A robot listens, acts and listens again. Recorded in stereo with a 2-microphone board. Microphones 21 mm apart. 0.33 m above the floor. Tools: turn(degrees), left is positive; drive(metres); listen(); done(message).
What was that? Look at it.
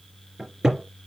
turn(degrees=-15)
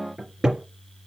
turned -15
turn(degrees=-150)
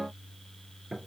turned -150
turn(degrees=-35)
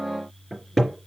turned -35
done("Facing the cupboard door, 2 to 4 m away.")